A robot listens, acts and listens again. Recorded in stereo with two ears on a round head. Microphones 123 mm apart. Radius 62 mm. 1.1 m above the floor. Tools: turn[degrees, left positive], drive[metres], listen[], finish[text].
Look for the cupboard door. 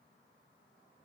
Action: listen[]
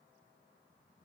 Action: listen[]
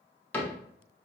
Action: turn[30]
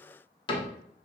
Thought: So it is at 135° left.
Action: turn[135]
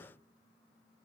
Action: listen[]
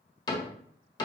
Thought: The cupboard door is now 35° left.
Action: turn[35]
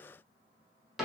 Action: finish[Found it: a cupboard door, straight ahead.]